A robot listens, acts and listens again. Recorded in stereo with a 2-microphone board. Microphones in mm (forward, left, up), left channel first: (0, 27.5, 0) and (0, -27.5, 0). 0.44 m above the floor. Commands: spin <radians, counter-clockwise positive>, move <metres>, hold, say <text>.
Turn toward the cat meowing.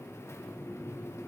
hold
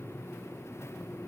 hold
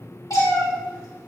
spin 1.22
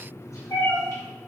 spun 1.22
spin 1.22
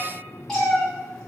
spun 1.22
spin 0.17
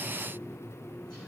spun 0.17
hold
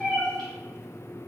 say Facing the cat meowing, 2 to 4 m away.